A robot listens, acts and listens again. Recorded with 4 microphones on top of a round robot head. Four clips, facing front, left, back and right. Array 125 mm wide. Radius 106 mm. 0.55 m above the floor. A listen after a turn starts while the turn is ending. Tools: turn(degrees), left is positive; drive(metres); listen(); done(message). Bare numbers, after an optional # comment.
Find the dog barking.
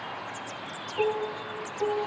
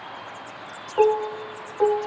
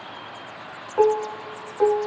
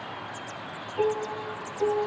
listen()
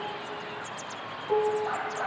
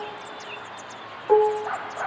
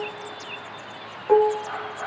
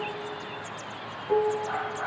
# The dog barking: 70° left.
turn(70)
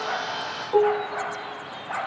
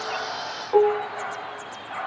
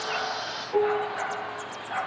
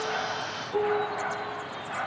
done("Found it: a dog barking, straight ahead, over 4 m away.")